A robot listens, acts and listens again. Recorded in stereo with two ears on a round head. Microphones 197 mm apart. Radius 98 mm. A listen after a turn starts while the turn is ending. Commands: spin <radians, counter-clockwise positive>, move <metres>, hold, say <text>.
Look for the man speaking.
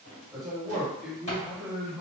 spin -0.52
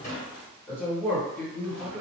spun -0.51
spin -0.52
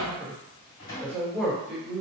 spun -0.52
spin -0.52
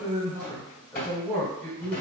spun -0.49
spin 0.52
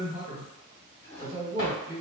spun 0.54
spin -0.44
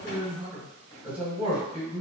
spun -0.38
say Found it: a man speaking, straight ahead, 1 to 2 m away.